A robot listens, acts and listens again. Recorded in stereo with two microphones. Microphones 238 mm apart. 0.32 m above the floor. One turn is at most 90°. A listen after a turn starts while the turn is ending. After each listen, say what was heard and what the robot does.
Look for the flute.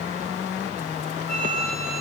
Turn 90° left.
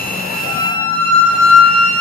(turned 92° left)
Found it: a flute, straight ahead, over 4 m away.